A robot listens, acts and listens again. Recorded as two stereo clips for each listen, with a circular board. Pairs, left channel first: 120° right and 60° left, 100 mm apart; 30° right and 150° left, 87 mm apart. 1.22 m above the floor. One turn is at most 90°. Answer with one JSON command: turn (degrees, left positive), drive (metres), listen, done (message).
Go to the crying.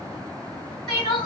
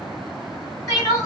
{"turn": -75}
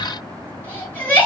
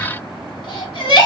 {"turn": -45}
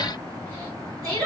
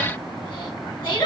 {"drive": 1.0}
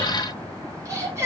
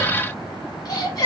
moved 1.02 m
{"drive": 1.0}
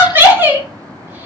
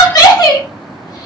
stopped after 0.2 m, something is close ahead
{"done": "Arrived at the crying, straight ahead."}